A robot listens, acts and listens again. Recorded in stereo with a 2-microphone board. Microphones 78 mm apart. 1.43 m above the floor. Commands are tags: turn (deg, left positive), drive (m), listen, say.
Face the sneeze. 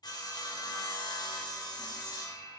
<listen/>
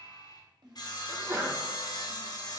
<turn deg="-30"/>
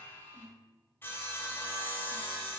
<listen/>
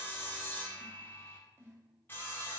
<say>I heard a sneeze, but can't make it out now. It was about straight ahead or 120° right.</say>